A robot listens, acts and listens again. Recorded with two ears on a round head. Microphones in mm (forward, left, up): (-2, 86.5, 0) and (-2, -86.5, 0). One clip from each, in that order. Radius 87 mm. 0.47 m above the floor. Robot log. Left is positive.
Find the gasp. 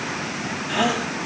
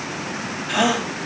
note: The gasp: about 35° right or 145° right.
cmd yaw -35
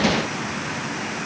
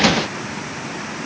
cmd idle
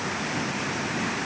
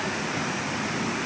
end: I heard a gasp, but can't make it out now. It was about straight ahead or 110° right.